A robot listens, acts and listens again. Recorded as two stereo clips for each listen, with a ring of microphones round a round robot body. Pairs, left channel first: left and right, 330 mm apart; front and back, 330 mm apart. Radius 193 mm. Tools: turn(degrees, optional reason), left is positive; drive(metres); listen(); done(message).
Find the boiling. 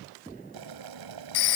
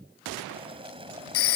turn(degrees=-105, reason="The boiling: 105° right.")
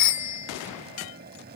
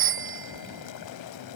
turn(degrees=-25, reason="The boiling is now 25° right.")
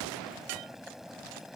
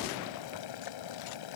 done("Found it: boiling, straight ahead.")